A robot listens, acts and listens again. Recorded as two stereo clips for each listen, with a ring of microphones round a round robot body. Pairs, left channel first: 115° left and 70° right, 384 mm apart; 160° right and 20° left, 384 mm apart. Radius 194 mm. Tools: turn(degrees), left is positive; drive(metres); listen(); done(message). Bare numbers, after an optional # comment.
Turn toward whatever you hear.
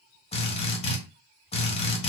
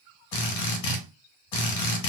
# The drill: 175° right.
turn(-175)
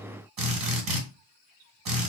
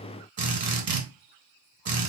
# The drill is now 35° right.
turn(-35)
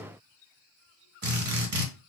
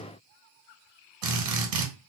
done("Facing the drill, 2 to 4 m away.")